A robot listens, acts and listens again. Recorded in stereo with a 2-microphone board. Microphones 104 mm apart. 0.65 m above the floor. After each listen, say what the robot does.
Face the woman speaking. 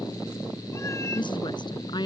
Turn 45° left.
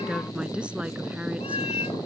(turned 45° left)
Turn 10° right.
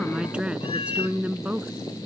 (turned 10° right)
Turn 15° right.
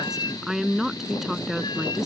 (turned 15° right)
Facing the woman speaking.